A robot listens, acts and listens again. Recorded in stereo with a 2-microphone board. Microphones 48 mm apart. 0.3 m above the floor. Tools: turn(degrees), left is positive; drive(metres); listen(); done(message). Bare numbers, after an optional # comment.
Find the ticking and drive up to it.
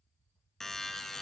listen()
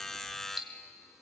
turn(-30)
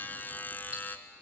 listen()
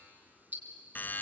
# So it is at 140° right.
turn(-140)
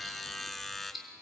drive(1.0)
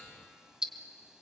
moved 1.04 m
# The ticking is now 20° right.
turn(-20)
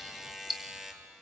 drive(1.0)
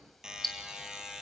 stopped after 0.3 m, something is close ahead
done("I am next to the ticking.")